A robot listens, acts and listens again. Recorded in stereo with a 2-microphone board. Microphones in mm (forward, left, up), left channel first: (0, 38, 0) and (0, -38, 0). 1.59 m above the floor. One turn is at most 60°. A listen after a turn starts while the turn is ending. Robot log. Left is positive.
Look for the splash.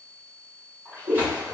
note: The splash: about 25° right or 155° right.
cmd yaw -25
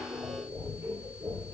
cmd idle
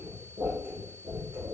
end: I heard a splash, but can't make it out now. It was about straight ahead or 130° right.